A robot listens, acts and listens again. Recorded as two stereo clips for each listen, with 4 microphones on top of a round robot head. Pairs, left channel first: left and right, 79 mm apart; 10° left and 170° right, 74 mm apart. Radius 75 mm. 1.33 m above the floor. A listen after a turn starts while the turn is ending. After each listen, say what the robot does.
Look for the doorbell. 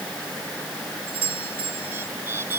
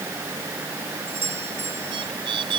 Turn 110° right.
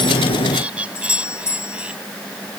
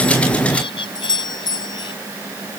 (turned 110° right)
Turn 35° left.
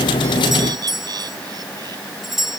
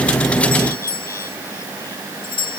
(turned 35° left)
Facing the doorbell.